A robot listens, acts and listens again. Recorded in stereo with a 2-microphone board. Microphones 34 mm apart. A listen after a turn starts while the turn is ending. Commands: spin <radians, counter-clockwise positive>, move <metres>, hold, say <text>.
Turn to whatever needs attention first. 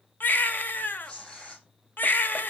spin 1.13
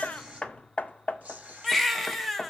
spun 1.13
say Found it: a baby crying, straight ahead.